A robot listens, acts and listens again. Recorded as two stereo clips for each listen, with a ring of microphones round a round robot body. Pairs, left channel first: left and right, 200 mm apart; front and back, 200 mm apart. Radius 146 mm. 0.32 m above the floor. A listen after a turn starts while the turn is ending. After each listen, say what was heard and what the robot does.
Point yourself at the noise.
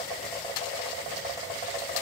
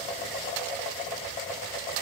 Keep listening.
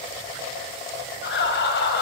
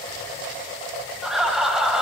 The laughter: 95° left. Turn 95° left.
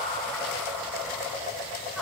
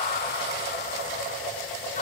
Keep listening.
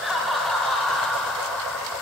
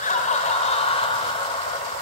Found it: laughter, straight ahead, 1 to 2 m away.